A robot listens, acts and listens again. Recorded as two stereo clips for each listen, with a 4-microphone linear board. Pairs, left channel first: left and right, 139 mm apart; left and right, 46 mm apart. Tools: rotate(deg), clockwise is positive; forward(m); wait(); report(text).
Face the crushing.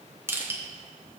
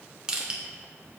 rotate(15)
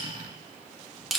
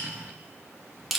report("Facing the crushing, 1 to 2 m away.")